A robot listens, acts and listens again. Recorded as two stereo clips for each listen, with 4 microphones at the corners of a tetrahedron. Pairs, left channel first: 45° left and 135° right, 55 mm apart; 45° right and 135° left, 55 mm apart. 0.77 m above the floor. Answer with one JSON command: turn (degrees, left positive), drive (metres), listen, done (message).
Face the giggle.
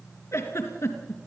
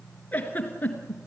{"turn": 15}
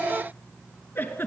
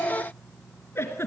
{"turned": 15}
{"done": "Facing the giggle."}